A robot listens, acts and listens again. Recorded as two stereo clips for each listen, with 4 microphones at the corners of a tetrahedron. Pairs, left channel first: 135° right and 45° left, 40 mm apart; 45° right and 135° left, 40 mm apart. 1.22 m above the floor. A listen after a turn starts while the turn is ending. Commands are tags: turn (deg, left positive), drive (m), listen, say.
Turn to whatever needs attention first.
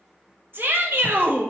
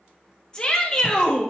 <turn deg="25"/>
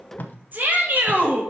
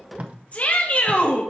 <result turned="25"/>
<say>Facing the shout.</say>